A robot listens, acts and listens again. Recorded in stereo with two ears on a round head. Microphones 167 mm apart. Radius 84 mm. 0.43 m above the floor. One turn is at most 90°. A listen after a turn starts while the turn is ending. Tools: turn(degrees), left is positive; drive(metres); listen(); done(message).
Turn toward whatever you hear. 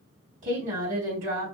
turn(degrees=-45)
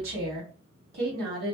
turn(degrees=-80)
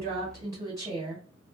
turn(degrees=-20)
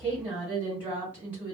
turn(degrees=-10)
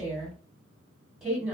done("Facing the woman speaking.")